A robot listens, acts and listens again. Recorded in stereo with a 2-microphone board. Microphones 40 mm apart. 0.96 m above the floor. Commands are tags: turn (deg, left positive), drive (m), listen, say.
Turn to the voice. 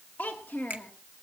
<turn deg="55"/>
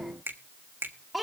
<say>Facing the child speaking, 1 to 2 m away.</say>